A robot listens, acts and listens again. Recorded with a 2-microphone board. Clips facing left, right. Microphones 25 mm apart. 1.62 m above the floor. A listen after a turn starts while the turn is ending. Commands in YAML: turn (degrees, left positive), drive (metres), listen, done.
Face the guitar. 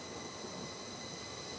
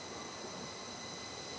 listen: true
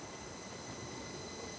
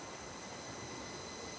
listen: true
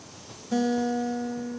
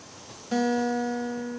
turn: -40
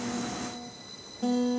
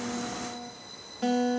turn: -95
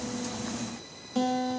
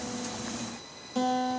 turn: 10
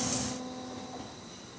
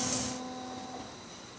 done: "Facing the guitar."